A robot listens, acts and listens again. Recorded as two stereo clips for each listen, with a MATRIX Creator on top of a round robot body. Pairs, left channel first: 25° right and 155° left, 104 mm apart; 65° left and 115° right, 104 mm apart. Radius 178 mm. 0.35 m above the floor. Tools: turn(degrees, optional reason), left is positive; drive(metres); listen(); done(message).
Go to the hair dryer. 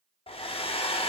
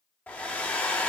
drive(metres=1.0)
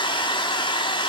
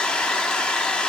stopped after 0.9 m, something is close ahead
turn(degrees=-10, reason="The hair dryer is now 10° right.")
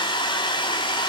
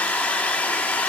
done("I am next to the hair dryer.")